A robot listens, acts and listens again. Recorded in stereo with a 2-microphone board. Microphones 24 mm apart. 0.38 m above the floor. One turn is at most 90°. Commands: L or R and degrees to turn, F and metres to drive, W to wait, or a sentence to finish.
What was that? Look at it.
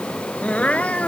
L70
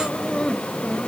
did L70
W
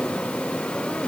W
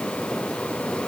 I heard crying, but can't make it out now. It was about straight ahead or 40° left.